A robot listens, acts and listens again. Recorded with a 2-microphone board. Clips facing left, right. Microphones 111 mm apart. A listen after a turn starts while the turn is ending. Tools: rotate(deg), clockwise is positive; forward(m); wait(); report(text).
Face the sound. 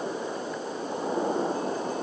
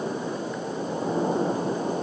wait()
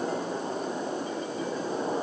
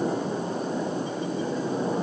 wait()
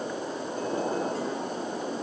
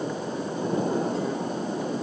report("I can't make out anything.")